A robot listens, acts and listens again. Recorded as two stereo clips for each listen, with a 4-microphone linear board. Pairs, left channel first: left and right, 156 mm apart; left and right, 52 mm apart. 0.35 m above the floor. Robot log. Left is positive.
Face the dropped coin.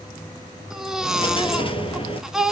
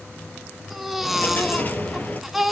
note: The dropped coin: about 35° left or 145° left.
cmd yaw +35
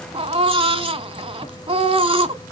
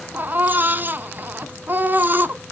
cmd idle
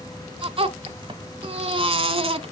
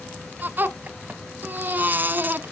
end: I heard a dropped coin, but can't make it out now. It was about straight ahead or 110° left.